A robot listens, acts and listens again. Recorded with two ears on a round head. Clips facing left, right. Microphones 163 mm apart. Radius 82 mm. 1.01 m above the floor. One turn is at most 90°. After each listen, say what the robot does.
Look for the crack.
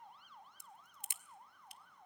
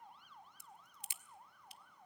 Turn 45° left.
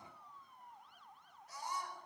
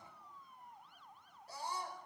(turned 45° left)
Keep listening.
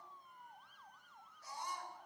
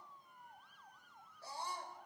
I heard a crack, but can't make it out now. It was about straight ahead or 90° left.